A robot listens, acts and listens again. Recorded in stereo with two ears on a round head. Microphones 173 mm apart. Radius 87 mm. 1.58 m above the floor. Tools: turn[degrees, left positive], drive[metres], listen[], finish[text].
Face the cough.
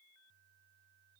Action: listen[]
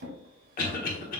Thought: The cough: about 45° left or 135° left.
Action: turn[45]
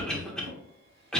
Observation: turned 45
Action: finish[Facing the cough, 1 to 2 m away.]